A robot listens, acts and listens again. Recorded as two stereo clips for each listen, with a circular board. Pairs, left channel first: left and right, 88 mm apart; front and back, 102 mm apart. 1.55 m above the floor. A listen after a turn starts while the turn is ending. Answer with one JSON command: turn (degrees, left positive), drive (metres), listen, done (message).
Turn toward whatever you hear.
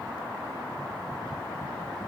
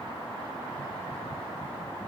{"listen": true}
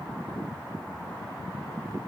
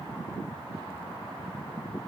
{"listen": true}
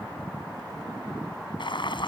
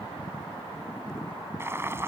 {"turn": 115}
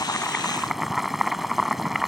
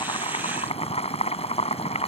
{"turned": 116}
{"done": "Facing the boiling."}